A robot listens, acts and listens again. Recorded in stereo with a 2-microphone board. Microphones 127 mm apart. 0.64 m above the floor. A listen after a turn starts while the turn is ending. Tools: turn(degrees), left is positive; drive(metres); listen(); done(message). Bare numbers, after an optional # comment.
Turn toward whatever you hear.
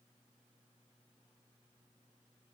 listen()
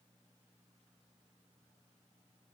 listen()
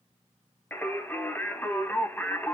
turn(30)
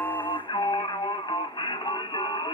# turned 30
# So it is at 135° left.
turn(135)
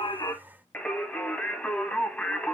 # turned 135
# The singing is now 10° left.
turn(10)
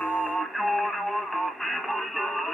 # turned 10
done("Facing the singing.")